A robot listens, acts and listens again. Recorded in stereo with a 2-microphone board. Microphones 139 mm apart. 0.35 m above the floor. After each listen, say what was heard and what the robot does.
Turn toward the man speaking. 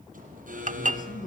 The man speaking: about 60° left or 120° left. Turn 60° left.
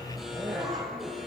Keep listening.
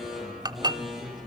Keep listening.
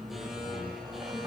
I heard a man speaking, but can't make it out now. It was about straight ahead or 60° left.